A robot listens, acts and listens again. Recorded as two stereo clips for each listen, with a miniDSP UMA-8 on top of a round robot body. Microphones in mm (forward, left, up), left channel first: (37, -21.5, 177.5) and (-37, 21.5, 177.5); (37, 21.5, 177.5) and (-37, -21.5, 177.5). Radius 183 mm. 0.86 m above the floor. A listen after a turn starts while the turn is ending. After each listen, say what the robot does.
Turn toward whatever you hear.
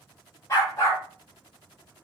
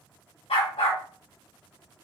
Turn 30° left.
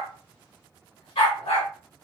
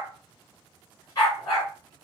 Turn 20° right.
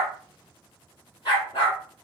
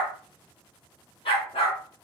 Found it: a dog barking, straight ahead, 2 to 4 m away.